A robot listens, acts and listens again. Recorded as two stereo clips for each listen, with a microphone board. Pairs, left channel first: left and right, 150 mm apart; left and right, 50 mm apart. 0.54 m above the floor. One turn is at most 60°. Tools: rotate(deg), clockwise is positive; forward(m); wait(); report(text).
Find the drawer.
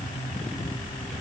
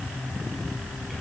wait()
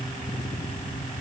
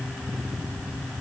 wait()
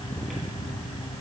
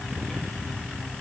report("I can't make out a drawer to turn to.")